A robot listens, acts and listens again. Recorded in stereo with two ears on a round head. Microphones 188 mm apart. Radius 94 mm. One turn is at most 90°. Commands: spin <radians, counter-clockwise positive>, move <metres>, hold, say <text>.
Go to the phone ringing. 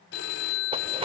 spin 1.05
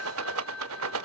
move 1.0
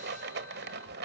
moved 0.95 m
hold
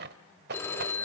spin 0.26
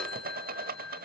move 1.0
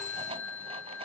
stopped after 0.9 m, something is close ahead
spin 0.17
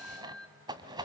say I am next to the phone ringing.